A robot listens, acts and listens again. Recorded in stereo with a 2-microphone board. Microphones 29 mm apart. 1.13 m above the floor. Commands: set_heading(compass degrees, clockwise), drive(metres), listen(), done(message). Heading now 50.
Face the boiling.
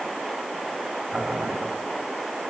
set_heading(115)
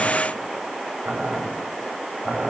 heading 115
set_heading(165)
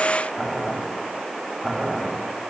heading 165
set_heading(175)
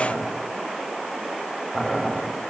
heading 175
done("Found it: boiling, straight ahead, over 4 m away.")